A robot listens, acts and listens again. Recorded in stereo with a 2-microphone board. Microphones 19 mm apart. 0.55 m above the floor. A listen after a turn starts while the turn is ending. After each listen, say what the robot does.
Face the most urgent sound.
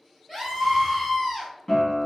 Turn 30° right.
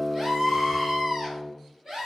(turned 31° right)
Turn 135° right.
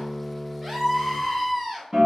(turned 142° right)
Facing the scream, 1 to 2 m away.